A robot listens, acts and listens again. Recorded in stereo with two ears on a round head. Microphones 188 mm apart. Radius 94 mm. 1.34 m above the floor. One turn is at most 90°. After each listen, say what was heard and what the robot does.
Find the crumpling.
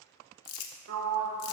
Turn 90° left.
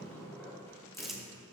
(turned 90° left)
Found it: crumpling, straight ahead.